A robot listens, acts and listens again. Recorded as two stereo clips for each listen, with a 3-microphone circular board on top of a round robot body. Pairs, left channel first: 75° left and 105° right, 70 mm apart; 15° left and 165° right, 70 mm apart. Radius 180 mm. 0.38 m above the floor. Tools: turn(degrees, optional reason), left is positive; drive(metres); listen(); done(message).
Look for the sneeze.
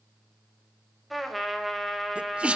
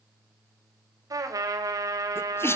turn(degrees=-30, reason="The sneeze: 30° right.")
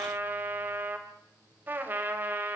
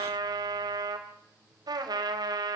done("I heard a sneeze from this way, but can't make it out now.")